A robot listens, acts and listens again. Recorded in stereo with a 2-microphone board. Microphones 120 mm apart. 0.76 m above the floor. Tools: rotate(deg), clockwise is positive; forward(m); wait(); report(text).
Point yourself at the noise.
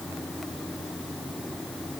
wait()
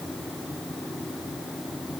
wait()
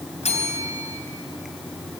rotate(-60)
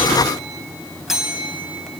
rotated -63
report("Facing the bell, 2 to 4 m away.")